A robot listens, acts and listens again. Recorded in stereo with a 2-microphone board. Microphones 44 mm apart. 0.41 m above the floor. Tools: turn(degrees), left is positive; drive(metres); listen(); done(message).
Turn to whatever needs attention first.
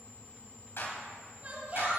turn(degrees=-40)
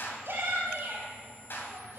turn(degrees=-95)
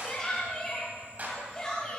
turn(degrees=15)
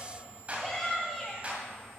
done("Facing the shout, 2 to 4 m away.")